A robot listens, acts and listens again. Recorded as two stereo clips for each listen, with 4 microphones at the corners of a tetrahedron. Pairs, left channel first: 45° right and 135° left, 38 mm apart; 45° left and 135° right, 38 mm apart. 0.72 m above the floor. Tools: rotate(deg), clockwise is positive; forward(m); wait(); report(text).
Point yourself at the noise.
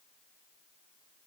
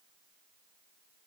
wait()
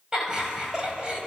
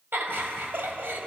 rotate(160)
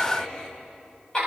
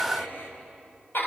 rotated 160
rotate(-20)
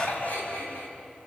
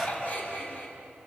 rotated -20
report("Facing the laughter, over 4 m away.")